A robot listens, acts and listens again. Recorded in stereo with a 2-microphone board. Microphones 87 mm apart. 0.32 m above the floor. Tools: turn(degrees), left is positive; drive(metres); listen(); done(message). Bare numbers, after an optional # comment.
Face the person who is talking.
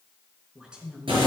turn(-30)
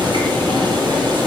listen()
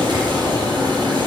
listen()
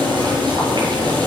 done("I heard a woman speaking, but can't make it out now. It was about 20° left or 140° right.")